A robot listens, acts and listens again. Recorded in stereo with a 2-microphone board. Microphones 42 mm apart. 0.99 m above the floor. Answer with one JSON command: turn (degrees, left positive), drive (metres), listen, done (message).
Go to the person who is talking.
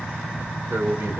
{"turn": -90}
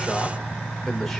{"drive": 1.0}
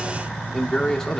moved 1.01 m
{"turn": 10}
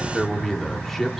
{"drive": 1.0}
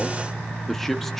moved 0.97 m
{"drive": 1.0}
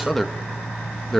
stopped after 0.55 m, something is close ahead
{"done": "Arrived at the man speaking, straight ahead."}